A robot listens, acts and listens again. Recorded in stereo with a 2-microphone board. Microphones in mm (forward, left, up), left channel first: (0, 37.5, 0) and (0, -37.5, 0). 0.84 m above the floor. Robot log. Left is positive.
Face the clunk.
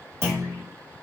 note: The clunk: about 35° right or 145° right.
cmd yaw -35
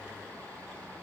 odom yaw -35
cmd idle
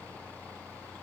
end: I heard a clunk, but can't make it out now. It was about straight ahead or 110° right.